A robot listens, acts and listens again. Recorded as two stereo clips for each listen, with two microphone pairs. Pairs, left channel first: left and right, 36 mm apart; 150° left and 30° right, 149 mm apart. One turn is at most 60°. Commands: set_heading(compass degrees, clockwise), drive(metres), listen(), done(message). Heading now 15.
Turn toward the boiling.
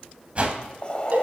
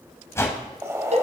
set_heading(335)
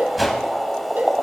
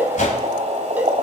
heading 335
done("Facing the boiling, 1 to 2 m away.")